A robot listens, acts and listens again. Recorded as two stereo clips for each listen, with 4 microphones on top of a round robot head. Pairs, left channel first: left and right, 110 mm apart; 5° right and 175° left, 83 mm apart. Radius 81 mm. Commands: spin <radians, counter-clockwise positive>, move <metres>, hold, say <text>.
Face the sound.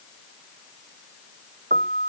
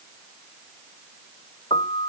spin -1.05
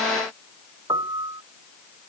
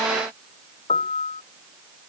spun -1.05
spin -0.35
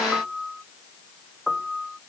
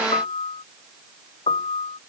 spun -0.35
say Found it: a piano, straight ahead.